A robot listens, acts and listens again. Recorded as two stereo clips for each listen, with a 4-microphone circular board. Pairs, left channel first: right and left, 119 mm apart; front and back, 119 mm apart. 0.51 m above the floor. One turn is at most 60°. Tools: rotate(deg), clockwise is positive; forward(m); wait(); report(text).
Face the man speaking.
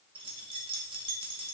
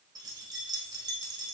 wait()
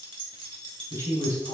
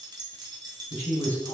rotate(30)
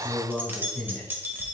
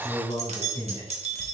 report("Facing the man speaking, 2 to 4 m away.")